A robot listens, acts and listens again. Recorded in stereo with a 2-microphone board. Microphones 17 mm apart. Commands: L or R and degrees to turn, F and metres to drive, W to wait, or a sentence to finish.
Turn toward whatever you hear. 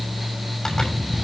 W
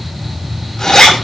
L45
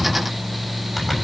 Facing the zipper.